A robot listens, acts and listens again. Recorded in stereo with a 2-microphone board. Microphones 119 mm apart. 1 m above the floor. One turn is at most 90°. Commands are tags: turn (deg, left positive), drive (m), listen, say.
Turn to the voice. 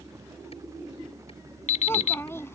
<turn deg="20"/>
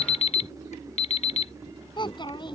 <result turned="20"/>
<turn deg="90"/>
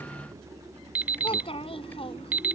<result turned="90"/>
<turn deg="50"/>
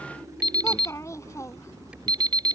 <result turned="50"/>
<turn deg="25"/>
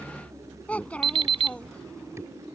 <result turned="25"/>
<turn deg="10"/>
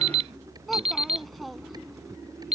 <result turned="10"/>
<say>Facing the child speaking.</say>